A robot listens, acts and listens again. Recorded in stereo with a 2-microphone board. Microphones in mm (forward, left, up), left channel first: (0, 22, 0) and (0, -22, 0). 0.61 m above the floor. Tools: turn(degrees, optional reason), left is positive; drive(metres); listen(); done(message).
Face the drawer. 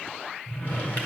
turn(degrees=50, reason="The drawer: about 50° left or 130° left.")
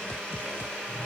listen()
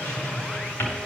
turn(degrees=80, reason="So it is at 80° left.")
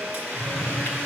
turn(degrees=30, reason="The drawer is now 30° left.")
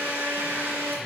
listen()
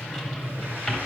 done("Facing the drawer.")